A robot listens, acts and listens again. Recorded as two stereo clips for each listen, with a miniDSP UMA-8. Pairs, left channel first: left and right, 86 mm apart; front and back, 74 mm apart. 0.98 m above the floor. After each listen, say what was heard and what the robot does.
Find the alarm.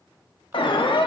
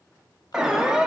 The alarm: 100° left. Turn 100° left.
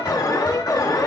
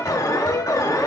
The alarm is now 45° left. Turn 45° left.
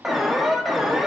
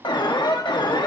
Facing the alarm, under 1 m away.